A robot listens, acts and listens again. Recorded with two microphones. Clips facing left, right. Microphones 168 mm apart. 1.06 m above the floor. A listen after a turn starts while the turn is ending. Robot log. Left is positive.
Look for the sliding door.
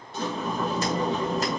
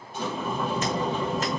cmd yaw +90
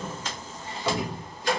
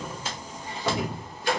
note: So it is at 15° right.
cmd yaw -15
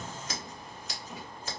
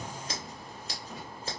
end: Facing the sliding door, 2 to 4 m away.